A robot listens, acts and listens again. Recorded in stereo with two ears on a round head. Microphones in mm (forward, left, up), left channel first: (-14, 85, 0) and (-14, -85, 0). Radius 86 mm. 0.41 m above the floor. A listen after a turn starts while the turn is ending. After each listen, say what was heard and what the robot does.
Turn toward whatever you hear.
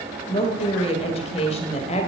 The woman speaking: about 35° left or 145° left. Turn 35° left.
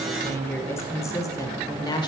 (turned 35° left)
The woman speaking: about 25° left or 155° left. Turn 25° left.
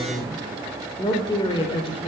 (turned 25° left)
The woman speaking: about 30° left or 150° left. Turn 30° left.
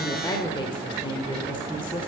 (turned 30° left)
The woman speaking: about 25° left or 155° left. Turn 25° left.
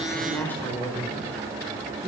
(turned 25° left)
So it is at 10° left. Turn 10° left.
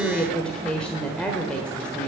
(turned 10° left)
Facing the woman speaking, 1 to 2 m away.